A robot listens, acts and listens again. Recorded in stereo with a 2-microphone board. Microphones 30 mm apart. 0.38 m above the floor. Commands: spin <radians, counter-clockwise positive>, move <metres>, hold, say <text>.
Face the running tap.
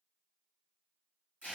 hold
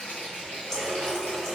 spin 0.35
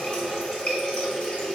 spin 2.36
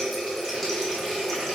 say Found it: a running tap, straight ahead, under 1 m away.